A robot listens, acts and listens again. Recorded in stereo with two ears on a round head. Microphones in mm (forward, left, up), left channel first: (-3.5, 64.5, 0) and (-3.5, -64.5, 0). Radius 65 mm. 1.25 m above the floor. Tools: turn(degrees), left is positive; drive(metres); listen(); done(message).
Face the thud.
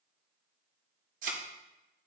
turn(degrees=-60)
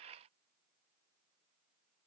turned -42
listen()
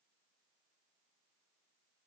done("I heard a thud, but can't make it out now. It was about 20° right or 80° right.")